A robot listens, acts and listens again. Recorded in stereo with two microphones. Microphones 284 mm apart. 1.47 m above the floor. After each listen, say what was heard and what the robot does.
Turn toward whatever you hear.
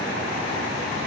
Keep listening.
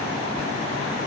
Keep listening.
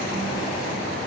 I can't make out anything.